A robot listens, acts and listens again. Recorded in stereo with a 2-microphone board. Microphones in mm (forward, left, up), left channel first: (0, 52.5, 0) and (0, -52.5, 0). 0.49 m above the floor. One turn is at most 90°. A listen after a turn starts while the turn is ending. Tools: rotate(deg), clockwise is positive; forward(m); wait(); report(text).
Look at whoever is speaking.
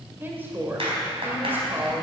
rotate(20)
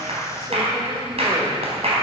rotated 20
wait()
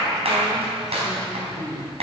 rotate(90)
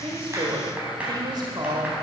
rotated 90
rotate(55)
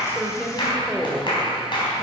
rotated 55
rotate(-10)
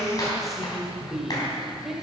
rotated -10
report("Found it: a woman speaking, straight ahead, 1 to 2 m away.")